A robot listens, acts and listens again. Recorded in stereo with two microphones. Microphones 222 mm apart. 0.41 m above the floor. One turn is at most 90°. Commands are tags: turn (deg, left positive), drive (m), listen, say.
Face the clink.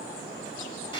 <listen/>
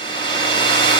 <listen/>
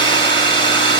<say>I can't make out a clink, only a hair dryer.</say>